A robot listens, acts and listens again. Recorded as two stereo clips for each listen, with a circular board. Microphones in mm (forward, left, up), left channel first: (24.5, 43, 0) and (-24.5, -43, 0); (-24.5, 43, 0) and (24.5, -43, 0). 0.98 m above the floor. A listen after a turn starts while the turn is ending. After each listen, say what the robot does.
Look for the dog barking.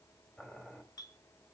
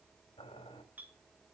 Keep listening.
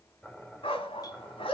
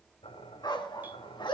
Turn 80° left.
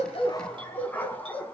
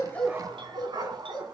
Turn 15° right.
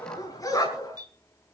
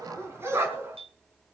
Found it: a dog barking, straight ahead, 2 to 4 m away.